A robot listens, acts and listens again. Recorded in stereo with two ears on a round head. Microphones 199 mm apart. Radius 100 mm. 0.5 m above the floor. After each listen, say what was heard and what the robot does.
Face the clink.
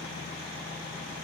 Keep listening.
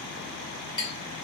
The clink: about 25° left or 155° left. Turn 25° left.
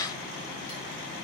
Keep listening.
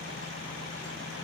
Keep listening.
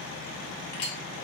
So it is at 130° left. Turn 130° left.
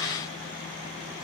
Keep listening.
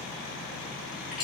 Found it: a clink, straight ahead, under 1 m away.